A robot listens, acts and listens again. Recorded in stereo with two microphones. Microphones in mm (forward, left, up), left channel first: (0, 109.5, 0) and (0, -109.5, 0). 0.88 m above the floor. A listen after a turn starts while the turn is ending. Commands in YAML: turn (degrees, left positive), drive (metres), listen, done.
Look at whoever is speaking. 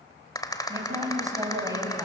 turn: -15
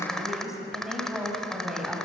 done: "Facing the woman speaking."